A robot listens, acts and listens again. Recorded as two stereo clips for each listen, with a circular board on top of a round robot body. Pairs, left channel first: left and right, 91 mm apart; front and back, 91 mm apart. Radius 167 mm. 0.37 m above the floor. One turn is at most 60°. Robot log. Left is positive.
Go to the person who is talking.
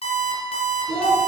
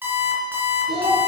note: The child speaking: 170° left.
cmd yaw +60
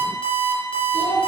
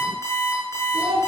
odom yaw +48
note: The child speaking is now 120° left.
cmd yaw +60
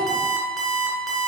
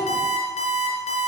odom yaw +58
note: Nothing new. It was at 60° left.
cmd yaw +60
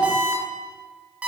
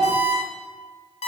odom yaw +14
note: The child speaking is now 45° left.
cmd yaw +45
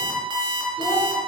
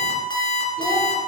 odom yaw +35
note: Nothing new. It was at 10° left.
cmd yaw +10
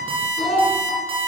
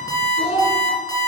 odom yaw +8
cmd fwd 1.0
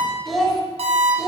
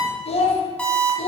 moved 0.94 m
cmd fwd 1.0
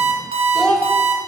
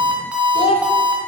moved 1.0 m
cmd fwd 1.0
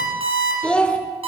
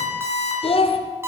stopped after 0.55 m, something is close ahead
note: The child speaking is now 10° left.
cmd yaw +10
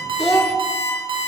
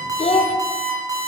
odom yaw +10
end: Arrived at the child speaking, straight ahead.